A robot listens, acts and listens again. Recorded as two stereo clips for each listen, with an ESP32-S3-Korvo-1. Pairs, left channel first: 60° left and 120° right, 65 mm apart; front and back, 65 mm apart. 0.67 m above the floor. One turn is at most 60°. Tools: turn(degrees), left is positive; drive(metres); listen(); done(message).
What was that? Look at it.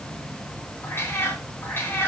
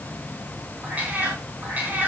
turn(degrees=60)
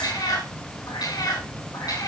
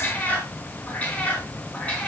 turn(degrees=60)
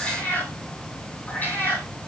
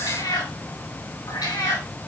done("Found it: a cat meowing, straight ahead.")